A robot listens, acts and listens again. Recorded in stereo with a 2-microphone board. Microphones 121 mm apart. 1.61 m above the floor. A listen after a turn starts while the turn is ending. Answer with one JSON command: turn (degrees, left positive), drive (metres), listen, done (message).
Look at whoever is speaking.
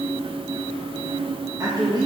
{"turn": -35}
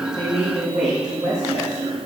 {"turn": -105}
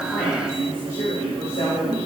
{"turn": 45}
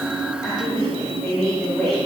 {"done": "Facing the woman speaking."}